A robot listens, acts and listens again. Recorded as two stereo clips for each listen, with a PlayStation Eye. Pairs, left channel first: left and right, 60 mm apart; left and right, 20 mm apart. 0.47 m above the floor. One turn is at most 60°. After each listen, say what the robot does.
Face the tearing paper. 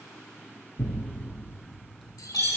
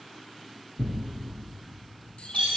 Turn 30° left.
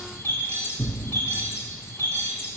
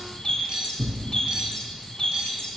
Turn 25° right.
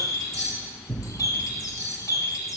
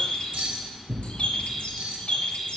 Found it: tearing paper, straight ahead, 1 to 2 m away.